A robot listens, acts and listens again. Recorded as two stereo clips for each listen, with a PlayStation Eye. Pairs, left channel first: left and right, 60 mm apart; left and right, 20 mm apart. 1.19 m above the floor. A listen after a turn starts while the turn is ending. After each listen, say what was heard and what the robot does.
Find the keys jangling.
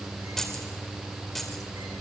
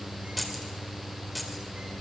Turn 30° left.
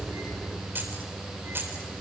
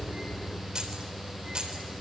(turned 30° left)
So it is at 40° right. Turn 40° right.
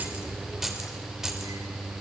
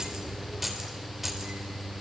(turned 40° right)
The keys jangling is now 10° right. Turn 10° right.
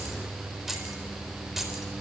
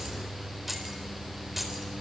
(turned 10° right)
Found it: keys jangling, straight ahead.